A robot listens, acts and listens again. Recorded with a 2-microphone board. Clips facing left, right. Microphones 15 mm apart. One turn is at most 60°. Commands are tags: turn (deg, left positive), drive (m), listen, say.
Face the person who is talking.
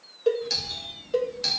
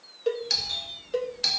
<turn deg="40"/>
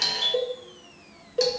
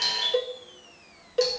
<turn deg="60"/>
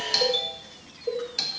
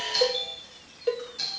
<turn deg="55"/>
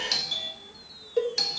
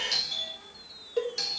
<turn deg="-30"/>
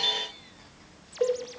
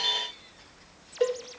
<turn deg="10"/>
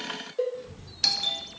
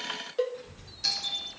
<say>Found it: a child speaking, straight ahead, over 4 m away.</say>